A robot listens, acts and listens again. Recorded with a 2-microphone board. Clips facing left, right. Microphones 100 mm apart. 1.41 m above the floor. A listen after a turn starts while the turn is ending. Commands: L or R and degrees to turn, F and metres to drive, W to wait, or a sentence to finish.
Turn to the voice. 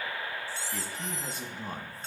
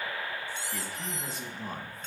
L30
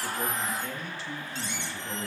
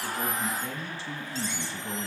R35
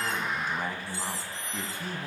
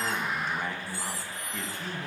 Facing the man speaking, 1 to 2 m away.